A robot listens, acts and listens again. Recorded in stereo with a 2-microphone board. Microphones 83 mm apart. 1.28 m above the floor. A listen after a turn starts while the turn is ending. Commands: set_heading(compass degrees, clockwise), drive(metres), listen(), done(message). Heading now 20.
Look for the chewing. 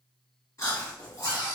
set_heading(345)
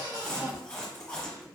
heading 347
set_heading(337)
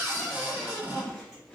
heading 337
done("Facing the chewing, 1 to 2 m away.")